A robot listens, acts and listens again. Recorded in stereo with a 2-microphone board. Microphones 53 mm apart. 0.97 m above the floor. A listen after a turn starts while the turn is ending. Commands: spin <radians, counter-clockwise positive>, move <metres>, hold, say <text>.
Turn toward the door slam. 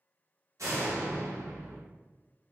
spin -1.22
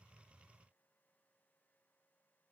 hold
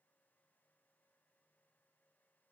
say I heard a door slam, but can't make it out now. It was about straight ahead or 40° right.